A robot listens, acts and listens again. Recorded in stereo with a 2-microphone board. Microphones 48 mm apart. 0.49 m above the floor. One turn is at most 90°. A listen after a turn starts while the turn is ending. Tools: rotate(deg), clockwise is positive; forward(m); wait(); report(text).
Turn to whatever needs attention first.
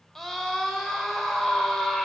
rotate(-30)
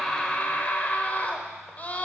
rotate(-90)
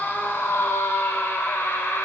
rotate(-90)
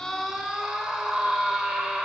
rotate(15)
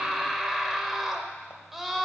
report("Facing the scream.")